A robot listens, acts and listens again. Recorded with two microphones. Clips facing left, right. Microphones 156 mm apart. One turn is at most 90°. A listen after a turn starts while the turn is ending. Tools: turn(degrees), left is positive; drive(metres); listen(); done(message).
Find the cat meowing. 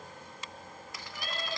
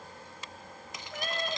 turn(degrees=-55)
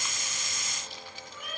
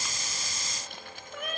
turn(degrees=-70)
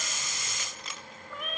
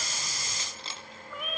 done("Facing the cat meowing, over 4 m away.")